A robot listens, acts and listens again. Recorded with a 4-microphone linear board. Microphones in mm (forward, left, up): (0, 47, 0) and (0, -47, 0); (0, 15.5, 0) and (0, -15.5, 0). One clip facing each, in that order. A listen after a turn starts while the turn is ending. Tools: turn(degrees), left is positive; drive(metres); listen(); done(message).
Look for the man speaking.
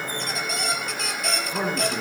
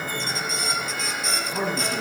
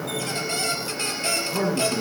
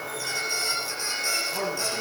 turn(degrees=20)
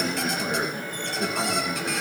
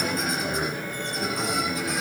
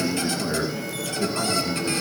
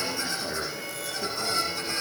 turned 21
turn(degrees=140)
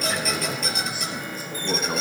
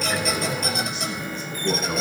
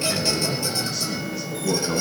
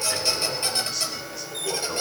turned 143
done("Found it: a man speaking, straight ahead.")